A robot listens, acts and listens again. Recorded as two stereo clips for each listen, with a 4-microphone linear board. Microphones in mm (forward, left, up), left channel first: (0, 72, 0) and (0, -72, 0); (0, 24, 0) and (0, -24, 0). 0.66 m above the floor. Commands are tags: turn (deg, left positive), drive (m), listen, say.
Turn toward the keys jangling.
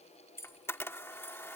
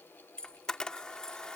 <turn deg="15"/>
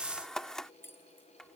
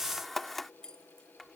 <turn deg="15"/>
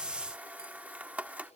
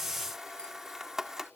<listen/>
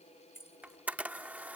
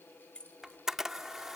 <turn deg="15"/>
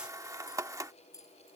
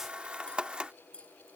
<turn deg="25"/>
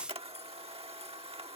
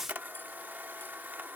<listen/>
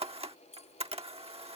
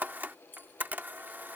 <turn deg="130"/>
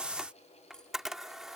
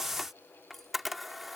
<listen/>
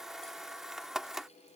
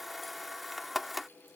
<listen/>
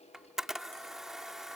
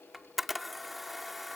<say>Facing where the keys jangling came from. I can't hear it now.</say>